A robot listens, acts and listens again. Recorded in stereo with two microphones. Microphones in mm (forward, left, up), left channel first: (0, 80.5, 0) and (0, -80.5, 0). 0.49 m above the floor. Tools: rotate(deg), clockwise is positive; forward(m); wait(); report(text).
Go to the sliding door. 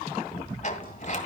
rotate(-50)
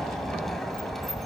forward(1.0)
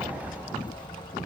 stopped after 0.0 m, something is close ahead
rotate(10)
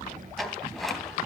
report("Something is in my way. I am facing the sliding door but have not reached it.")